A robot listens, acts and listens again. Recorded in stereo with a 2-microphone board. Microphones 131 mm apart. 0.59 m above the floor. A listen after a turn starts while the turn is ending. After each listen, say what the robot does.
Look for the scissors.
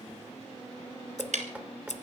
Turn 70° left.
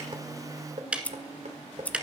Turn 10° left.
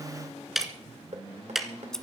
Found it: scissors, straight ahead, 1 to 2 m away.